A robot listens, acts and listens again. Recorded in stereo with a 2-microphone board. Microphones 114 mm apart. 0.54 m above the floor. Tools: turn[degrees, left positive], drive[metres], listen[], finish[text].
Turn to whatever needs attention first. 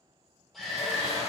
Action: turn[30]
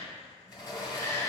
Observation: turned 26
Thought: So it is at 150° left.
Action: turn[150]
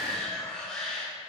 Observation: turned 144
Action: finish[Facing the shout, 1 to 2 m away.]